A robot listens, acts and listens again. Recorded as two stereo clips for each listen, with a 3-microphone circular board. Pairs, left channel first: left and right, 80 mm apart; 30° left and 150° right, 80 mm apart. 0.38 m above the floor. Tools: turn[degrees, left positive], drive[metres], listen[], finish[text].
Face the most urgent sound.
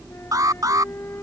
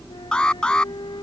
Thought: The alarm: 50° right.
Action: turn[-50]
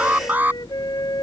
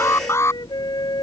Thought: The alarm is now 25° right.
Action: turn[-25]
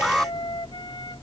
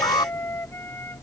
Action: finish[Found it: an alarm, straight ahead.]